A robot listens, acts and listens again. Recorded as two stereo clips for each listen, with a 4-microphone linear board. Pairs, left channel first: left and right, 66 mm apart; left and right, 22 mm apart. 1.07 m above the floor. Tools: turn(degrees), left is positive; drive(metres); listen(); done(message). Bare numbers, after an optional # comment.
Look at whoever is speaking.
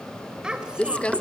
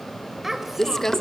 turn(-30)
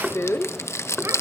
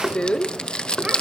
listen()
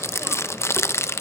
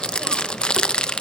listen()
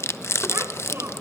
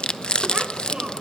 done("I heard a child speaking, but can't make it out now. It was about 15° left or 135° right.")